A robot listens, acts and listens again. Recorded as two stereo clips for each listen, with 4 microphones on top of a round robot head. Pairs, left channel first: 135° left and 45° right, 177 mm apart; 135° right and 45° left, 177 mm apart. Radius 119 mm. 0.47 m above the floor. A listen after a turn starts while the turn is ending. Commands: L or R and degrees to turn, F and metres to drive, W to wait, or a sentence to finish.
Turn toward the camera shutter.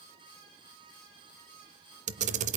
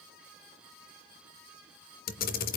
R95
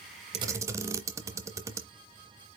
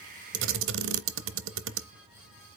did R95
L30
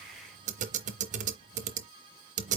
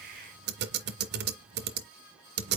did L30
L10
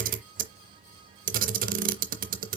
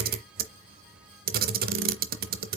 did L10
Found it: a camera shutter, straight ahead, under 1 m away.